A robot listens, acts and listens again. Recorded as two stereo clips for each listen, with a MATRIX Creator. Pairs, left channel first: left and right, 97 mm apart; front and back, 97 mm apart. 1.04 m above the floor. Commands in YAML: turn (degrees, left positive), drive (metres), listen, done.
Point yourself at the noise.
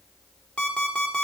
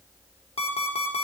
turn: 10
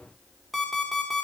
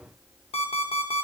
done: "Facing the alarm clock, 1 to 2 m away."